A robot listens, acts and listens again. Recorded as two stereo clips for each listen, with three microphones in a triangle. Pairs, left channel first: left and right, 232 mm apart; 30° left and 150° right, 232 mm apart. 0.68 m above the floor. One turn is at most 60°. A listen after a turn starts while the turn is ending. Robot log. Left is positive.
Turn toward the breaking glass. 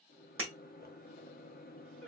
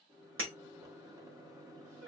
note: The breaking glass: 120° right.
cmd yaw -60
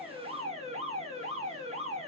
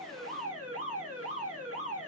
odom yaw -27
note: Nothing new. It was at 90° right.
cmd yaw -60
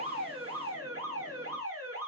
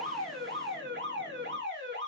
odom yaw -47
note: Nothing new. It was at 45° right.
cmd yaw -45
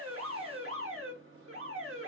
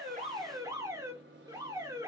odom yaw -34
note: Nothing new. It was at 10° right.
cmd yaw -10
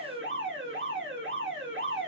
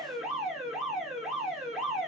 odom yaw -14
end: Facing where the breaking glass came from. I can't hear it now.